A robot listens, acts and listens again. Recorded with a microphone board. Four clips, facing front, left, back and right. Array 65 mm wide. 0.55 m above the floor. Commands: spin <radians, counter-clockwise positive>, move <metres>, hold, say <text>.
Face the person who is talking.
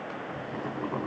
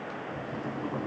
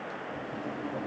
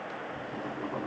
hold
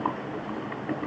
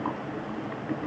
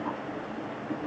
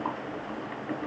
hold
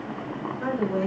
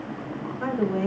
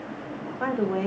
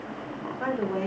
spin -2.79
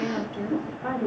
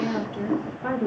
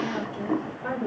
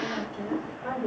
spin 1.22
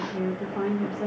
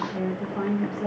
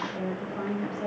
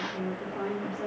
spin 0.35
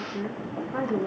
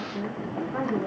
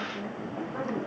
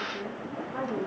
say Facing the woman speaking, 1 to 2 m away.